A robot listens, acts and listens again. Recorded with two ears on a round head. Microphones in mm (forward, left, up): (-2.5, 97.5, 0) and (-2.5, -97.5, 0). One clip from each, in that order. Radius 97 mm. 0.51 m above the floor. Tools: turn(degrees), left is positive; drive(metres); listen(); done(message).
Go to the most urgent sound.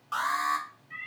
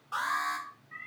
turn(degrees=30)
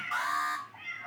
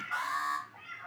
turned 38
turn(degrees=105)
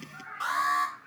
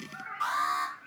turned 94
turn(degrees=10)
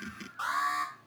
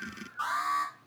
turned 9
drive(metres=1.0)
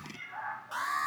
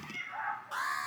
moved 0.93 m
drive(metres=1.0)
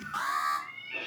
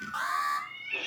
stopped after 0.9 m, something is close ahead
done("I am next to the alarm.")